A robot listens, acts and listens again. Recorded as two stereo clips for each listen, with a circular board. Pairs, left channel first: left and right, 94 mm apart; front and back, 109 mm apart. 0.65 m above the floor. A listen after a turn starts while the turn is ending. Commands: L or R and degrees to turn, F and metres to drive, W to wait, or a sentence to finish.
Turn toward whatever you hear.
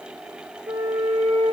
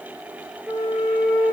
R100
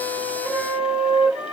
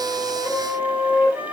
R40
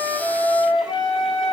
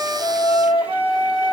Facing the flute.